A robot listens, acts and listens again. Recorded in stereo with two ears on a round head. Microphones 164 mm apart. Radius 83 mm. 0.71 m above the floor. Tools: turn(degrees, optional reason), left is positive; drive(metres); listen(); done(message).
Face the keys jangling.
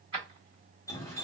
turn(degrees=-30, reason="The keys jangling: about 30° right or 150° right.")
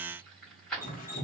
done("Facing the keys jangling, 1 to 2 m away.")